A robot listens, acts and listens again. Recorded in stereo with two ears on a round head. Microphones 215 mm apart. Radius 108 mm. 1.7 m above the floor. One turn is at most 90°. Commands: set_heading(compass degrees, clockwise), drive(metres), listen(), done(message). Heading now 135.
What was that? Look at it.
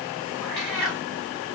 set_heading(105)
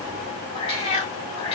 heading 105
set_heading(15)
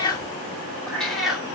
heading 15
done("Facing the cat meowing, 1 to 2 m away.")